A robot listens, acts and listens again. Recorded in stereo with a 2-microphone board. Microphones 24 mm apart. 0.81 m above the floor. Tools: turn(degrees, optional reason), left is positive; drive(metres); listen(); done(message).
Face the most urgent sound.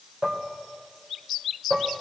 listen()
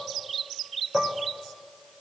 listen()
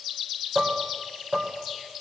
done("I can't make out anything urgent, only dishes clattering.")